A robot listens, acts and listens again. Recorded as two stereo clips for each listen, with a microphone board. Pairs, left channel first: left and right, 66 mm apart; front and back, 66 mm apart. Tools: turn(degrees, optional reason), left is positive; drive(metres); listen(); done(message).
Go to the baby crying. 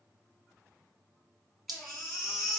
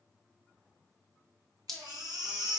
turn(degrees=180, reason="The baby crying: straight behind.")
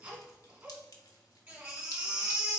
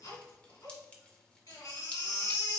turn(degrees=-25, reason="The baby crying is now 25° right.")
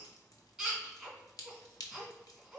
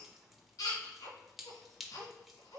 drive(metres=1.0)
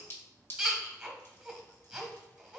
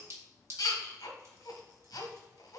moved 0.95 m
turn(degrees=-10, reason="The baby crying is now 10° right.")
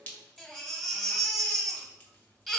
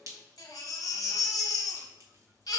drive(metres=1.0)
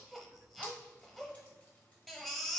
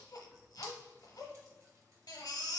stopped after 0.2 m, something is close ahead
done("I am next to the baby crying.")